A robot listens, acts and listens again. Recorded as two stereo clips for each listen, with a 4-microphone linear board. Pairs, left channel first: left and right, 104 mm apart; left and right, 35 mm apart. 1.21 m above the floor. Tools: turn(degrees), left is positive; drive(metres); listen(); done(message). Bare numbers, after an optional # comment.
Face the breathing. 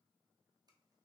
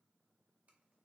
listen()
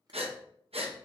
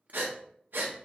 # The breathing: about 75° right or 105° right.
turn(-75)
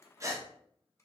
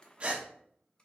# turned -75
# So it is at 30° right.
turn(-30)
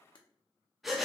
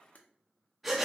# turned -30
done("Found it: breathing, straight ahead, under 1 m away.")